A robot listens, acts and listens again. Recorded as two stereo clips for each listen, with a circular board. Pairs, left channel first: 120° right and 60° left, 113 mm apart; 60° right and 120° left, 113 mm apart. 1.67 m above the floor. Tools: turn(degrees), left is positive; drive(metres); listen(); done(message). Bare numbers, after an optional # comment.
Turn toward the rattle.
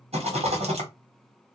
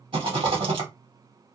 # The rattle: 85° left.
turn(85)
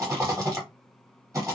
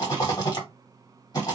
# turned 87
done("Facing the rattle, 1 to 2 m away.")